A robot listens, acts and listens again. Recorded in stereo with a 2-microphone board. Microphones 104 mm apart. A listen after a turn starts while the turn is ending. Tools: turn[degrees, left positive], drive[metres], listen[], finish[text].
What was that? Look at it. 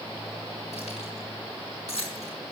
Action: turn[90]
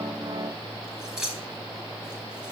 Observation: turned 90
Action: finish[Found it: keys jangling, straight ahead, over 4 m away.]